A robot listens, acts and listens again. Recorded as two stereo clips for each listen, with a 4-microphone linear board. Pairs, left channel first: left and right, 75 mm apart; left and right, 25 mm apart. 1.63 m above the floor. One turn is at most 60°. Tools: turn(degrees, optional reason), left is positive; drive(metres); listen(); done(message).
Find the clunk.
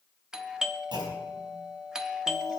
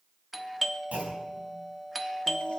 turn(degrees=-60, reason="The clunk: about 70° right or 110° right.")
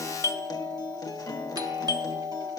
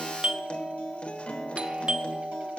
listen()
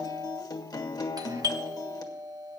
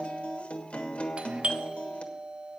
done("I heard a clunk, but can't make it out now. It was about 10° right or 50° right.")